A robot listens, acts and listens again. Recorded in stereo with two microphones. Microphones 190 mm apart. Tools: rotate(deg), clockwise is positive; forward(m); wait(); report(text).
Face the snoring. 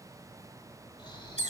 rotate(-25)
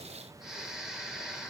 report("Found it: snoring, straight ahead.")